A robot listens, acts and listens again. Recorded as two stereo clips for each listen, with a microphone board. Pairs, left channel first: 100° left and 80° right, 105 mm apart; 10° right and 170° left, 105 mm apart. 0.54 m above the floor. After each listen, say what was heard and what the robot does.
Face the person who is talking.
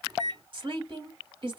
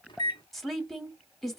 The woman speaking: 100° right. Turn 100° right.
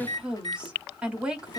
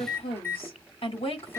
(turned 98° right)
Facing the woman speaking, 1 to 2 m away.